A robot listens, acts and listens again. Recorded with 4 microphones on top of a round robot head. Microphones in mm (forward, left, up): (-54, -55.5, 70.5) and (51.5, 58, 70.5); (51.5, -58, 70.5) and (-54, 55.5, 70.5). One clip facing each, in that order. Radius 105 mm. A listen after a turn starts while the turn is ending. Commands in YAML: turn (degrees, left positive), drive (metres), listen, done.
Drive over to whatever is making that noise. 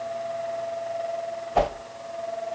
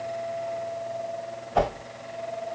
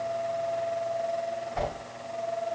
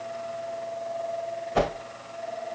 turn: 140
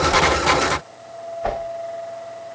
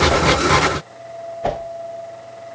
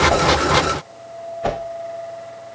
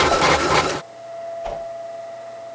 turn: -15
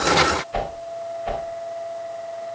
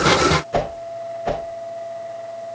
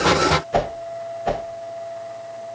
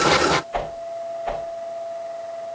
drive: 1.0
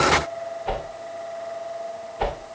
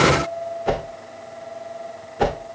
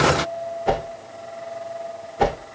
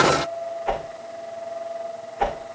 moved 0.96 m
drive: 1.0
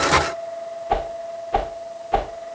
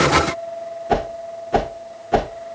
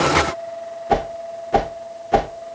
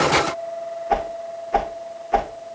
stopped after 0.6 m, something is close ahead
done: "I am next to the whoosh."